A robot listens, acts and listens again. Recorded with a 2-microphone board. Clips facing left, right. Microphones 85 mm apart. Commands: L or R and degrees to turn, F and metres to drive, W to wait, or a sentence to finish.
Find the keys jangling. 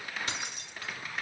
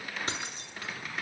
R30
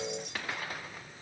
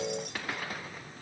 W
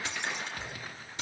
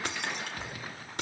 R110
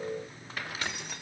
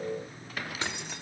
R25
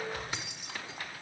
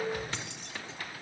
L10
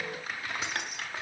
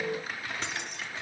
Found it: keys jangling, straight ahead, 1 to 2 m away.